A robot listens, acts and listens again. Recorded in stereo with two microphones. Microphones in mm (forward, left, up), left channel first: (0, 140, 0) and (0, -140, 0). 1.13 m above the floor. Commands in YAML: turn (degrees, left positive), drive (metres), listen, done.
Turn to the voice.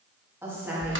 turn: -30
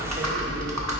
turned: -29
listen: true
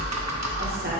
listen: true
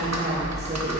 done: "I heard a woman speaking, but can't make it out now. It was about 20° left or 140° right."